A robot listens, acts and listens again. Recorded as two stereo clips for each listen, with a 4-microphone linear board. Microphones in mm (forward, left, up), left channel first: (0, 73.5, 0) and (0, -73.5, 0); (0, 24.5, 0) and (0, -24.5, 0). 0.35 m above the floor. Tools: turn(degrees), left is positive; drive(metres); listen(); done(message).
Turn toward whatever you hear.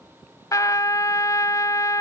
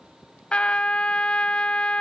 turn(degrees=25)
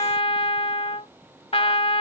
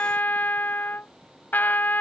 turn(degrees=130)
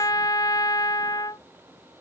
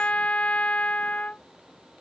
turn(degrees=30)
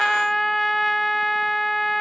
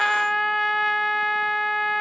done("Found it: a trumpet, straight ahead.")